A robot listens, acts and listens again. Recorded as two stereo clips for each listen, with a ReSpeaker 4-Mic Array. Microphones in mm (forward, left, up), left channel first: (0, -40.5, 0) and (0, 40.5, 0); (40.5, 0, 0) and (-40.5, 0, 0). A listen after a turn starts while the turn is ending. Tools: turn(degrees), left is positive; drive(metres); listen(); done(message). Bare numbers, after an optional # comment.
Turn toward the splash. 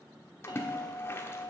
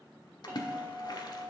# The splash: 30° right.
turn(-30)
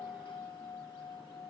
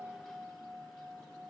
done("I heard a splash from this way, but can't make it out now.")